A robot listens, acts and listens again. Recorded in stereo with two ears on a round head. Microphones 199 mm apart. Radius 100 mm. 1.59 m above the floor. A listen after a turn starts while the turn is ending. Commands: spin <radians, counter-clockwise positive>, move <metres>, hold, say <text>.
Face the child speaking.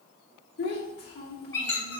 spin 0.79
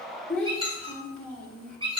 say Found it: a child speaking, straight ahead.